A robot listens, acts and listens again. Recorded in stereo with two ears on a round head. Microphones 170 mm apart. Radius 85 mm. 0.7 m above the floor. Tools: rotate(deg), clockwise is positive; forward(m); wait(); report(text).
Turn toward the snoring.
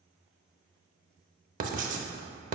wait()
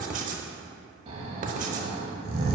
rotate(30)
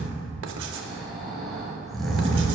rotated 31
report("Facing the snoring.")